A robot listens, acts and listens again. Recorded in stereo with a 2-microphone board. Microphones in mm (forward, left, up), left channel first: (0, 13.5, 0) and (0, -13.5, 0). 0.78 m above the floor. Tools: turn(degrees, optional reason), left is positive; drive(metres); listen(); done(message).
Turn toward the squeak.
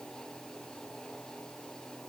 listen()
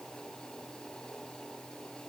listen()
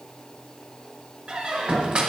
turn(degrees=-40, reason="The squeak: about 40° right or 140° right.")
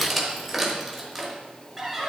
done("Facing the squeak, 1 to 2 m away.")